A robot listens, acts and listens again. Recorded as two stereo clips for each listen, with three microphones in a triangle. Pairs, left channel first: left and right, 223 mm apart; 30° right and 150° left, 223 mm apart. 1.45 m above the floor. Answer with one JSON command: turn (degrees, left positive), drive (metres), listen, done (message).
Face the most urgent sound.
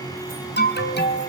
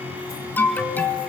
{"turn": 50}
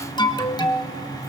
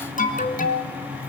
{"turn": 20}
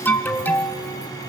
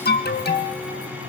{"turn": 10}
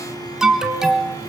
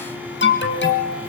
{"done": "Facing the alarm."}